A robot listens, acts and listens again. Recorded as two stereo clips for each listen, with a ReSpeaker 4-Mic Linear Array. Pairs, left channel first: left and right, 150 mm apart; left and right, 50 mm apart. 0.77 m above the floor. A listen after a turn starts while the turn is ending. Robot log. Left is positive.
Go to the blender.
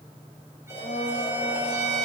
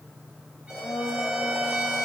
note: The blender: about 70° left or 110° left.
cmd yaw +70
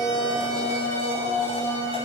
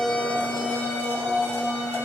note: So it is at 40° left.
cmd yaw +40
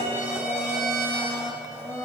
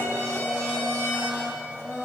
note: The blender is now 20° left.
cmd yaw +20
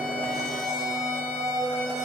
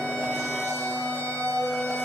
cmd fwd 1.0
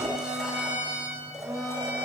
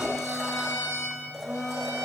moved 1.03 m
cmd fwd 1.0
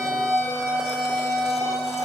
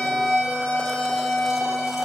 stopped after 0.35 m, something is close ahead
end: I am next to the blender.